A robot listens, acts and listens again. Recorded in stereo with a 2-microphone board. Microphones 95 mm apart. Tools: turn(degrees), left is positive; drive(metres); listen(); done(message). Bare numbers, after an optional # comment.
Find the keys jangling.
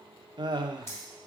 # The keys jangling: about 30° left or 150° left.
turn(30)
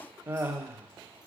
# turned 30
listen()
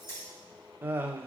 # The keys jangling: about 30° left or 150° left.
turn(30)
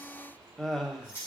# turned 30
# The keys jangling: about 25° left or 155° left.
turn(25)
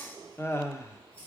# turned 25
listen()
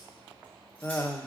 listen()
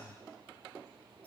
done("I heard keys jangling, but can't make it out now. It was about straight ahead or 130° left.")